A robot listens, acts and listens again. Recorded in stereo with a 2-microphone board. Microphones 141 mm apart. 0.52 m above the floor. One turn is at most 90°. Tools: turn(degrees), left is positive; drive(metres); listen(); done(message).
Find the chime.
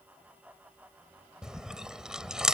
listen()
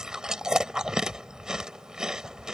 listen()
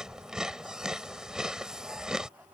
done("I can't make out a chime, only chewing.")